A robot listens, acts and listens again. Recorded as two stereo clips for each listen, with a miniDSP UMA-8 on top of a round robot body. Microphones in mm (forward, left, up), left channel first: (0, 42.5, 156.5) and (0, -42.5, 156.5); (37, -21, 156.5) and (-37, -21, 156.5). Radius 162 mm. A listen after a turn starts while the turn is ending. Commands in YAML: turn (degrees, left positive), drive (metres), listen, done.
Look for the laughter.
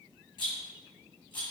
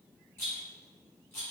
listen: true
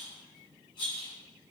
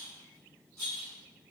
listen: true
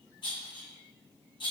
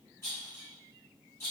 done: "I can't make out laughter, only a rattle."